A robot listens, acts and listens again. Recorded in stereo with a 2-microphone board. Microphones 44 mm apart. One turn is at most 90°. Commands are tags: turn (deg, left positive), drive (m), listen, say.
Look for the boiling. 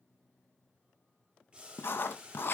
<turn deg="-25"/>
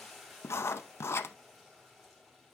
<say>Found it: boiling, straight ahead, 2 to 4 m away.</say>